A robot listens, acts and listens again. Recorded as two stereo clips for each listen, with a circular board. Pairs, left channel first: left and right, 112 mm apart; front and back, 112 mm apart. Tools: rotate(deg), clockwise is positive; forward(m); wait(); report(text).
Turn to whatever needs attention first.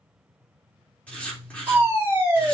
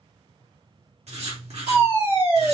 rotate(160)
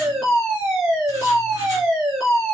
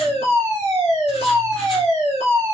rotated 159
report("Found it: a fire alarm, straight ahead, 2 to 4 m away.")